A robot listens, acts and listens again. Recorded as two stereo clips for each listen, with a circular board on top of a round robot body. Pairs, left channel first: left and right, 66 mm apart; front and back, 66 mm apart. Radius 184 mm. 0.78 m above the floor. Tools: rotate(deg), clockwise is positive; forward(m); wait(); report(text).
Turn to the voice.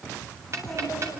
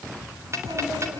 rotate(-170)
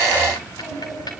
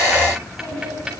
rotate(-45)
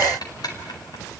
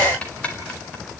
wait()
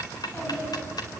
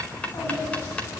rotate(-15)
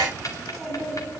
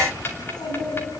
report("Found it: a child speaking, straight ahead.")